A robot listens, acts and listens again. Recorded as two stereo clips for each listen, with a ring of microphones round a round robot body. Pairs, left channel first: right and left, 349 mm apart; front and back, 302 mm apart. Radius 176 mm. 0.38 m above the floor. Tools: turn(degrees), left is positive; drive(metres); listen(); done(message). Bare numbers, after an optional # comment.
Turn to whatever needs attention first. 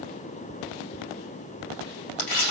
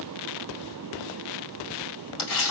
listen()
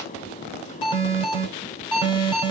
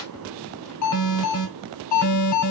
# The alarm: 15° right.
turn(-15)
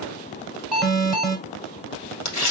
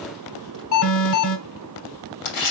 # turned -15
done("Found it: an alarm, straight ahead, 1 to 2 m away.")